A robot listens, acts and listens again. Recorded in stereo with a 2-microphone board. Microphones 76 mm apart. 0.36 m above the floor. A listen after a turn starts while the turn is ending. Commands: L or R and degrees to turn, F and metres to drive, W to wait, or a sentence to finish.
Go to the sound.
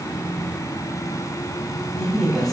L30
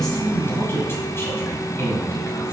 L140
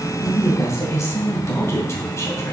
L45
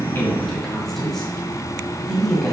F1.0
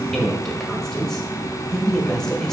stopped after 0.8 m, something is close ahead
L10
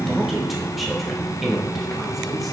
I am next to the woman speaking.